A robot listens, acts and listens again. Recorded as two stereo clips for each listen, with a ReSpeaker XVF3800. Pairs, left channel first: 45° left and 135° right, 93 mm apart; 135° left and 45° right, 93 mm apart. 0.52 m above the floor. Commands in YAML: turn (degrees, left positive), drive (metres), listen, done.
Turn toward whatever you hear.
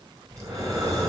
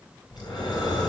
turn: 175
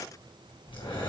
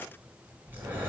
turn: 25
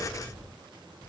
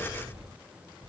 turn: -15
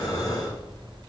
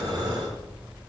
done: "Facing the breathing, 2 to 4 m away."